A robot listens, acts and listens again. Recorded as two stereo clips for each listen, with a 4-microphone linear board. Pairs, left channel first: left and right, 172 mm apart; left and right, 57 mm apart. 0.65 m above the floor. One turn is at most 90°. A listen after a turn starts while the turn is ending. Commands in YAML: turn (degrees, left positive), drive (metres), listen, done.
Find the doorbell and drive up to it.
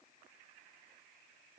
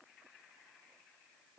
listen: true
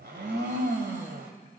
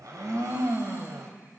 listen: true
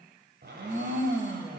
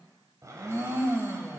done: "I can't make out a doorbell, only a blender."